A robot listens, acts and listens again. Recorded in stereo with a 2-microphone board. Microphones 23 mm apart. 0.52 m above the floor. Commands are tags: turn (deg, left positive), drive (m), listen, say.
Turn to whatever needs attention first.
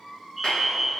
<turn deg="30"/>
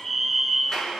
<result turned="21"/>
<turn deg="160"/>
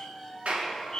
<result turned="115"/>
<turn deg="45"/>
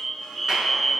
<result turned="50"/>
<turn deg="-10"/>
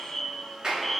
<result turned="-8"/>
<say>Facing the fire alarm.</say>